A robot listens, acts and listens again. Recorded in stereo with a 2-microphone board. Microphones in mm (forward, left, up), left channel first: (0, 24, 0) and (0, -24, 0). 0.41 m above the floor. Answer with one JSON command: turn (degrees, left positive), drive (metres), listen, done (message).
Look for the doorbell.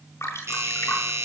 {"turn": -90}
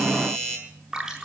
{"done": "Facing the doorbell, over 4 m away."}